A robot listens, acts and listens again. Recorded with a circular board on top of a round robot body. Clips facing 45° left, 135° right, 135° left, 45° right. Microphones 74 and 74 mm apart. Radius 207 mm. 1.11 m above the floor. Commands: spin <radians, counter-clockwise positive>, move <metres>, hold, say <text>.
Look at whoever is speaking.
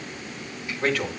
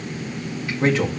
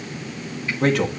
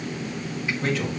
spin 2.79
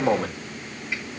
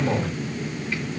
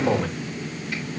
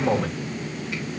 spin 0.79
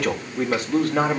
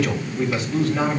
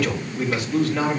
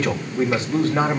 spin 0.17
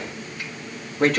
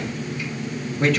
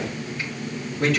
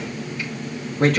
say Facing the man speaking.